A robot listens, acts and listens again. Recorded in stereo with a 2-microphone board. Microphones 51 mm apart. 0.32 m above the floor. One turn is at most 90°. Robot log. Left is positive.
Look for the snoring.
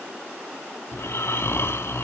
note: The snoring: about 60° left or 120° left.
cmd yaw +60
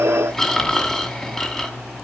note: So it is at 15° left.
cmd yaw +15
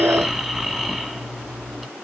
end: Facing the snoring.